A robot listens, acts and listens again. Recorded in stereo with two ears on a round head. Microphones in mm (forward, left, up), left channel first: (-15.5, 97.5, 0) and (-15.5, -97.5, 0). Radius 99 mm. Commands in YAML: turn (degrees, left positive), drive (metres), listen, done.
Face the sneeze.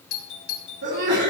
turn: -50
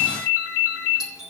listen: true
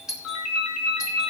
done: "I heard a sneeze, but can't make it out now. It was about straight ahead or 80° right."